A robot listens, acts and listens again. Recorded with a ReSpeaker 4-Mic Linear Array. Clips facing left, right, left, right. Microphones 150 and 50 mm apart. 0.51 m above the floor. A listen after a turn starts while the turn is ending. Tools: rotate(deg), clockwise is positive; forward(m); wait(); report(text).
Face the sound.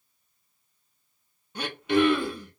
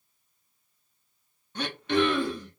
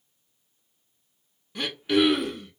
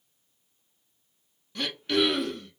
rotate(-30)
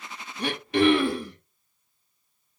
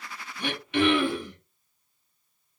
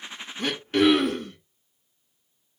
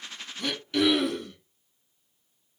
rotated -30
rotate(-140)
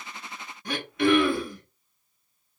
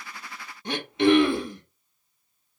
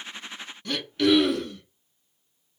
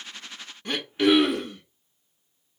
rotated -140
rotate(25)
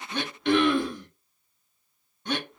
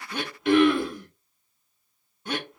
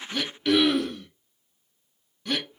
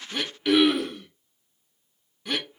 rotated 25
report("Found it: throat clearing, straight ahead.")